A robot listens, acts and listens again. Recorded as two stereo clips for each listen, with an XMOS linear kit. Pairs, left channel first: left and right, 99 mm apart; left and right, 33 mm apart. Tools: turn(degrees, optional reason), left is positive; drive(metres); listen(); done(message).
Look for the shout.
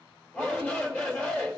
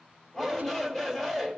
turn(degrees=15, reason="The shout: about 15° left or 165° left.")
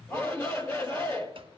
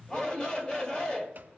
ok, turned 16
turn(degrees=150, reason="So it is at 150° left.")
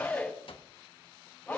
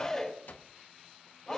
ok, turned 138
turn(degrees=10, reason="The shout is now 10° left.")
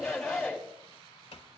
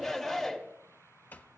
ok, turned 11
done("Facing the shout.")